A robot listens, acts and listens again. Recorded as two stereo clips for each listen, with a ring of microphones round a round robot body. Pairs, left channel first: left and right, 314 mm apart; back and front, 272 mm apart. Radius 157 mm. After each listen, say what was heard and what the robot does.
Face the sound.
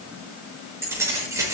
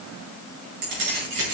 The keys jangling: 10° right. Turn 10° right.
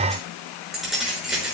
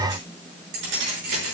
Facing the keys jangling, over 4 m away.